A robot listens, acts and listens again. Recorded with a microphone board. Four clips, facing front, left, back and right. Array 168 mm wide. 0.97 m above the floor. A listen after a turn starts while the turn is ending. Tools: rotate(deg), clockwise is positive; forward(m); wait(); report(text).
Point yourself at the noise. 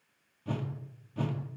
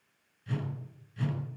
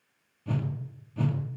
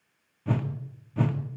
rotate(80)
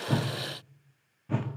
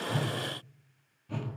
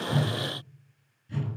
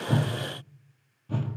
rotate(15)
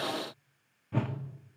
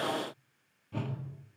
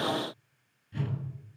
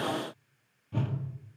report("Found it: a whoosh, straight ahead.")